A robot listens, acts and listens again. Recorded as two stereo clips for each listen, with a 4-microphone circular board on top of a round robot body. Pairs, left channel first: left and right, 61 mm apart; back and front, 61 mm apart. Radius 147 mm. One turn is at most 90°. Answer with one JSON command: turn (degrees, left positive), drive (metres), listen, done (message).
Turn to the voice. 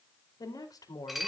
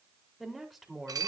{"turn": 85}
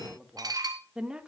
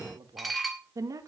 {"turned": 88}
{"turn": -10}
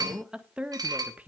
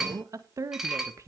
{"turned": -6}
{"turn": -25}
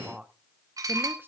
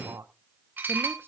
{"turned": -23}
{"turn": -15}
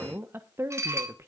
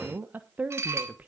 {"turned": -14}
{"turn": -60}
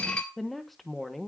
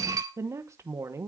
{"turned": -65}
{"done": "Found it: a woman speaking, straight ahead, 1 to 2 m away."}